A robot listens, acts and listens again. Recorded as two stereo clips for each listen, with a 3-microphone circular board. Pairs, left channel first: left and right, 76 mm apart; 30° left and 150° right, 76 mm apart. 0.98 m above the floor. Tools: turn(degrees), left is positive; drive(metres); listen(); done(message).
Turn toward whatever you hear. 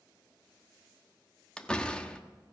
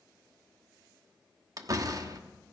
turn(degrees=170)
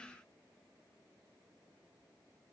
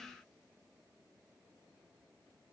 done("I heard a door slam from this way, but can't make it out now.")